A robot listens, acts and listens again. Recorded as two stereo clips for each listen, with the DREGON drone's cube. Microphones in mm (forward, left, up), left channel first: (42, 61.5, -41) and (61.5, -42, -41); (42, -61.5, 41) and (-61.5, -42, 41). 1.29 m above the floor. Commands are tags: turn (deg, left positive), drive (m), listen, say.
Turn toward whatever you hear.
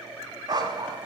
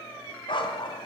<turn deg="-35"/>
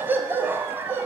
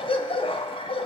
<turn deg="-10"/>
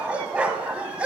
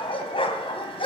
<say>Facing the dog barking.</say>